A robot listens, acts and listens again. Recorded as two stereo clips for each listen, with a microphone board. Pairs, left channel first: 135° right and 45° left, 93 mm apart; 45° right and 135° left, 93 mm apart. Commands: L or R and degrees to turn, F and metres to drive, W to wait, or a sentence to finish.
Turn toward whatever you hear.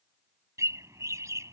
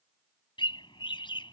R15
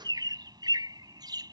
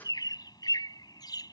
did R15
Found it: a bird, straight ahead.